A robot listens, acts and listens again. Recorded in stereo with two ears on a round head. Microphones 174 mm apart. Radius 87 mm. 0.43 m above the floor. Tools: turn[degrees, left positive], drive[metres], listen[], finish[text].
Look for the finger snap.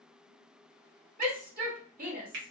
Thought: The finger snap: about 60° right or 120° right.
Action: turn[-60]
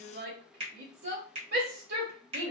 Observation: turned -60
Thought: So it is at 35° right.
Action: turn[-35]
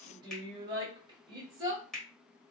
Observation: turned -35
Action: finish[Found it: a finger snap, straight ahead, 1 to 2 m away.]